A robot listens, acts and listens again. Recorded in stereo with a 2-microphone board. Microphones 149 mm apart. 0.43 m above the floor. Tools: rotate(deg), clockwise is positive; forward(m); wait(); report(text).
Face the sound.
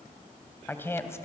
rotate(-20)
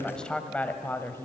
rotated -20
rotate(-15)
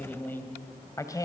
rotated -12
rotate(-25)
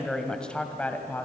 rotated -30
rotate(-30)
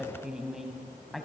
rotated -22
report("Found it: a woman speaking, straight ahead.")